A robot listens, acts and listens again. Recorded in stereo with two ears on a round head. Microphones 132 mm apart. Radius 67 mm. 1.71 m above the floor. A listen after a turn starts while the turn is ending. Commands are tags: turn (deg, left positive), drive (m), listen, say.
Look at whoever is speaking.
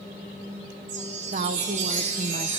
<turn deg="-55"/>
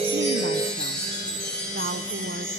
<listen/>
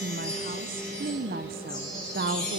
<turn deg="-70"/>
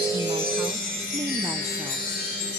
<listen/>
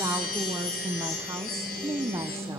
<turn deg="-20"/>
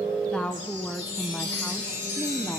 <say>Facing the woman speaking, 1 to 2 m away.</say>